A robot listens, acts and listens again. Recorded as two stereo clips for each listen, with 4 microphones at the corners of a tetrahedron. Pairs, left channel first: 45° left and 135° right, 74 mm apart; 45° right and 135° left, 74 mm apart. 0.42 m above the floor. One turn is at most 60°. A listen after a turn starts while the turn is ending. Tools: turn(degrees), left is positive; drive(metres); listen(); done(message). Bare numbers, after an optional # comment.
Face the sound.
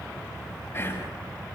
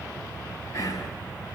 done("Found it: whispering, straight ahead.")